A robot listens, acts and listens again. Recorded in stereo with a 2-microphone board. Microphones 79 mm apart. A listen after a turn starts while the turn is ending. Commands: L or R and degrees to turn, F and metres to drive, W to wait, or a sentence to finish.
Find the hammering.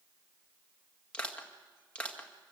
W
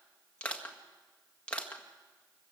W
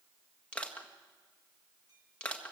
I can't make out hammering to turn to.